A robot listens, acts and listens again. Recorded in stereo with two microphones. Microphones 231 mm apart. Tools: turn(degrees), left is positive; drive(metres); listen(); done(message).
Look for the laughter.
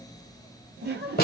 turn(degrees=-45)
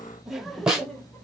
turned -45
done("Facing the laughter, 1 to 2 m away.")